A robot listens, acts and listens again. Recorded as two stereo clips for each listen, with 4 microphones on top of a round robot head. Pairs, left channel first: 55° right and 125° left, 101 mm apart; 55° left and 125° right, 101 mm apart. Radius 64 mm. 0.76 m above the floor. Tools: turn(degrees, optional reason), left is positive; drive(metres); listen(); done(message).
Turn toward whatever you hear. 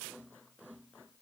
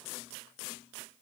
listen()
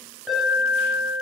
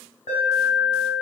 turn(degrees=35, reason="The alarm: 35° left.")
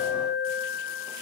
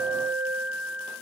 done("Facing the alarm, over 4 m away.")